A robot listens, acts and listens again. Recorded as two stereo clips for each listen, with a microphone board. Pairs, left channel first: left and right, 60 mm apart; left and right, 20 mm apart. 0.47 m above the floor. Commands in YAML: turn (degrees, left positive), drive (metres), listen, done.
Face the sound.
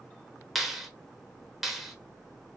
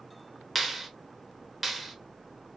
turn: 30
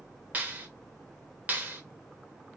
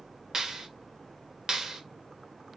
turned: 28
turn: -30
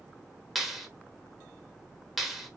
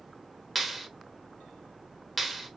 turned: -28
done: "Facing the clap."